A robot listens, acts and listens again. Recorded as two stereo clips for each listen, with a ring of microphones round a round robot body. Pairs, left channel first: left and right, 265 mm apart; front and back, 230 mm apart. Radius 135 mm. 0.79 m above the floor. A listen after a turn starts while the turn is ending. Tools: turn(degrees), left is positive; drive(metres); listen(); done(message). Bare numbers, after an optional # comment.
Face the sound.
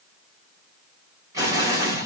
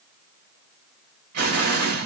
# The explosion: 165° right.
turn(-165)
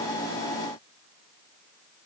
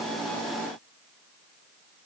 done("I heard an explosion from this way, but can't make it out now.")